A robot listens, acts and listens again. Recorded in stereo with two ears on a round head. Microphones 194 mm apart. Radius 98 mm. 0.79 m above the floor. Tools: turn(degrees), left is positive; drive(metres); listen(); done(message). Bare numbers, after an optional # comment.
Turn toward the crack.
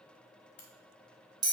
# The crack: about 50° left or 130° left.
turn(50)
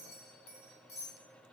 listen()
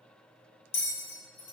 done("I heard a crack, but can't make it out now. It was about straight ahead or 80° left.")